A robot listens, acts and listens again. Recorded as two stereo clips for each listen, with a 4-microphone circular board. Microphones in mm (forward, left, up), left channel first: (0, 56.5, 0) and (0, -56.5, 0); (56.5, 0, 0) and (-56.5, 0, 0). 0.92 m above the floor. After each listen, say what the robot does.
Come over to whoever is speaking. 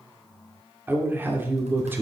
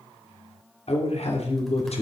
Turn 20° right.
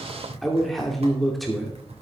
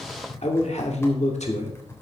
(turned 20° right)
Drive 1.0 m forward.
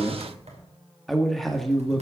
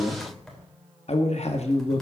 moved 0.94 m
Drive 1.0 m forward.
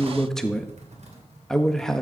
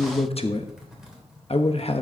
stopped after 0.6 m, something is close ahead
I am next to the man speaking.